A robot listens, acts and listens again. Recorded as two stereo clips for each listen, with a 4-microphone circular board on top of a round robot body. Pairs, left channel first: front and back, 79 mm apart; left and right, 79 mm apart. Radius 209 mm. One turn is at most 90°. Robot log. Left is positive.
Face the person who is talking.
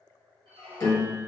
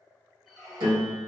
cmd idle
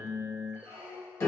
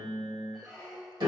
cmd idle
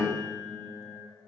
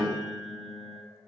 end: I can't make out anyone speaking, only a squeak and a piano.